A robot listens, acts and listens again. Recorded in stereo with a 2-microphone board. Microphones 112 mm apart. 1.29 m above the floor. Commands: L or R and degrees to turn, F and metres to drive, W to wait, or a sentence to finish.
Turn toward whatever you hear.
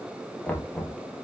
L30
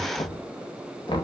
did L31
L135
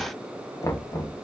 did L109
L30
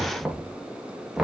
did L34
Facing the knocking.